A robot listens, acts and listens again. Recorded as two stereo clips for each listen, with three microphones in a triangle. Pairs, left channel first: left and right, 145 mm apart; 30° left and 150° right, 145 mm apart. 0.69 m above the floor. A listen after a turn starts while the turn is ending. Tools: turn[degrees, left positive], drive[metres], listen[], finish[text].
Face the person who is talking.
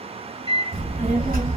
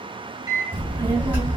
Thought: The child speaking: 75° right.
Action: turn[-75]
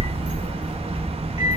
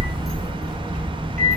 Thought: The child speaking is now 10° right.
Action: turn[-10]
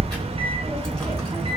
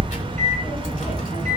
Action: finish[Facing the child speaking, 1 to 2 m away.]